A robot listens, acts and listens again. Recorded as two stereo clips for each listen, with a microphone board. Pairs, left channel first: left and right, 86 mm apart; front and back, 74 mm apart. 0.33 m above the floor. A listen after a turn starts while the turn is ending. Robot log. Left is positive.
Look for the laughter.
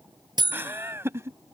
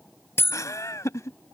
note: The laughter: 40° right.
cmd yaw -40
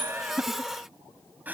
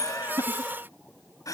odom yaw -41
note: The laughter is now 25° right.
cmd yaw -25
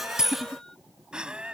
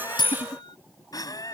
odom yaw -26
note: The laughter is now 15° right.
cmd yaw -15
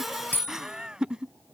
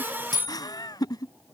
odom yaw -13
note: The laughter is now 10° right.
cmd yaw -10
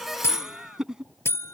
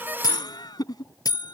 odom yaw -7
note: The laughter is now 10° right.
cmd yaw -10
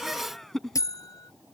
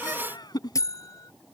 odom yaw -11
end: Facing the laughter.